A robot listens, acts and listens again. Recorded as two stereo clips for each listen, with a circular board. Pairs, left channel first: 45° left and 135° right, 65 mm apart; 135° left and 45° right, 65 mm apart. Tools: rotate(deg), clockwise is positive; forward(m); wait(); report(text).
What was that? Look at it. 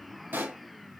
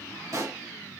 rotate(75)
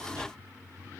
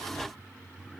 report("Facing where the pop came from. I can't hear it now.")